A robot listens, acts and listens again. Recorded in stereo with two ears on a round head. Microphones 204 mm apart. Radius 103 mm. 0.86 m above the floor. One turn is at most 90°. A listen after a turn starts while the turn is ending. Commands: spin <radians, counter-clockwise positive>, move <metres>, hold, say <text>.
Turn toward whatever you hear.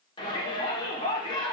spin 0.35
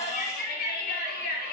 spin 1.57
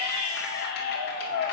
spin 0.79
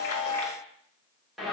say Found it: a shout, straight ahead.